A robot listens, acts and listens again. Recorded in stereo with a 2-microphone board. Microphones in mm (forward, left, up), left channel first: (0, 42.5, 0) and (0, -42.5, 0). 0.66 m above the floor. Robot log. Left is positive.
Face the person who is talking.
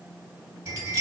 cmd idle
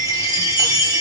cmd idle
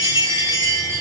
end: I can't make out anyone speaking to turn to.